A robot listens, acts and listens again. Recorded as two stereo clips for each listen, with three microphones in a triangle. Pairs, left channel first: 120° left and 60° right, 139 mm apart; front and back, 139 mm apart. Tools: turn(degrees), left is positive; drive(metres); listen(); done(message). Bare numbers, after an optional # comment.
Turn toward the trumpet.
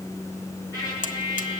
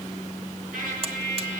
# The trumpet: 175° right.
turn(-175)
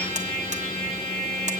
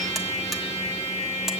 # The trumpet is now 40° right.
turn(-40)
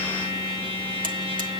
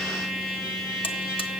done("Found it: a trumpet, straight ahead, over 4 m away.")